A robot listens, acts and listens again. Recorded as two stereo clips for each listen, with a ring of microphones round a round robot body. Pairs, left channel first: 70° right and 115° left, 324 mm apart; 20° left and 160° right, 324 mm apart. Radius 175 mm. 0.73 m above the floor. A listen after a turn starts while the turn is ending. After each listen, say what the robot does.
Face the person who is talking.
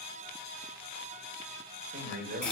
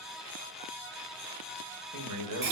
Turn 170° left.
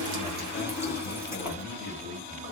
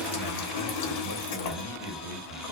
Found it: a man speaking, straight ahead, 1 to 2 m away.